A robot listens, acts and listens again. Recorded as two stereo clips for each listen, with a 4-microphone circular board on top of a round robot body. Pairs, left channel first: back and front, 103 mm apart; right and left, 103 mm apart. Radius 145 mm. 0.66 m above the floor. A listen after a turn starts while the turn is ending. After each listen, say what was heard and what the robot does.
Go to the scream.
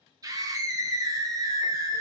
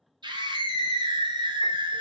The scream: 55° left. Turn 55° left.
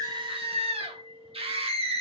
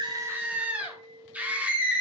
The scream is now 15° left. Turn 15° left.
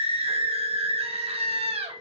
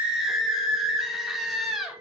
Drive 1.0 m forward.
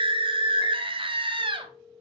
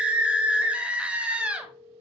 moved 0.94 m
The scream is now 15° left. Turn 15° left.
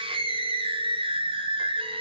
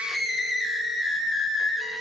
Drive 1.0 m forward.
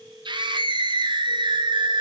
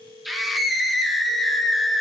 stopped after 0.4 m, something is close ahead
Arrived at the scream, straight ahead.